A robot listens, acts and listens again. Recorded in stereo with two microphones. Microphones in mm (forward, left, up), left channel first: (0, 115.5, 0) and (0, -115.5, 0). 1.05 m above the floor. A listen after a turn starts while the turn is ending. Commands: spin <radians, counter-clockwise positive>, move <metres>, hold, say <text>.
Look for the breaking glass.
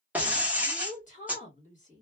spin -0.52
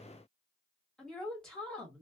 hold
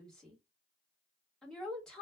say I heard breaking glass, but can't make it out now. It was about 25° left or 145° right.